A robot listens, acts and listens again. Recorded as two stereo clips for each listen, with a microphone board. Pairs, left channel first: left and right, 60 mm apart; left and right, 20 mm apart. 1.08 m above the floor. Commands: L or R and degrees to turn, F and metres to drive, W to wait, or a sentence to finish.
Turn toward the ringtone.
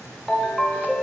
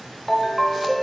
L30
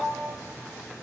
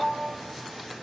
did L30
R25
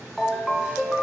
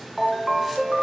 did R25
Facing the ringtone, under 1 m away.